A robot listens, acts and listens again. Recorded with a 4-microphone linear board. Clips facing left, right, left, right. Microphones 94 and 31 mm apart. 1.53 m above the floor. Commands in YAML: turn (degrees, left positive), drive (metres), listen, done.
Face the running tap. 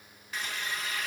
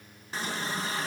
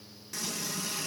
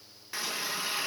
turn: -30
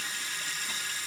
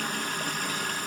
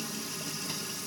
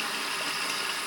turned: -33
turn: -110
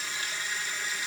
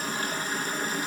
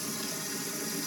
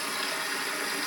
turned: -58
turn: -55
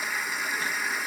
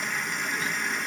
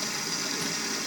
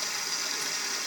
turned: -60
done: "Found it: a running tap, straight ahead."